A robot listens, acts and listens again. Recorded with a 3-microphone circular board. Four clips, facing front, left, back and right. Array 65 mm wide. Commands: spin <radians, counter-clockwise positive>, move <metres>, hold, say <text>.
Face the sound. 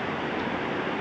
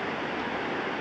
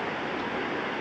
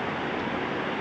hold
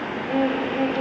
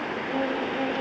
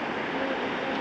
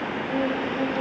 say Facing the violin.